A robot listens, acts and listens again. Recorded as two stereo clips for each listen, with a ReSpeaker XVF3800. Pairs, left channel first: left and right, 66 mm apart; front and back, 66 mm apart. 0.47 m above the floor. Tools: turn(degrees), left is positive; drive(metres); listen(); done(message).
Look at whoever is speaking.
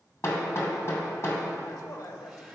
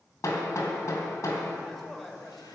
turn(degrees=85)
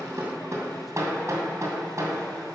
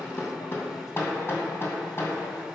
listen()
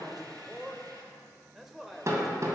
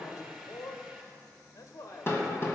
done("Facing the man speaking, 1 to 2 m away.")